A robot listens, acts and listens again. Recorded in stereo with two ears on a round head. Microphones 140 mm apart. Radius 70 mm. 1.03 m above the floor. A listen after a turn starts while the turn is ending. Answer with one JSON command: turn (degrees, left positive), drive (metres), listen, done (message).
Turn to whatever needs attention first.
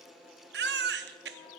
{"turn": -75}
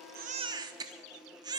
{"turn": -25}
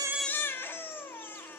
{"turn": 15}
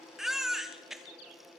{"done": "Facing the baby crying."}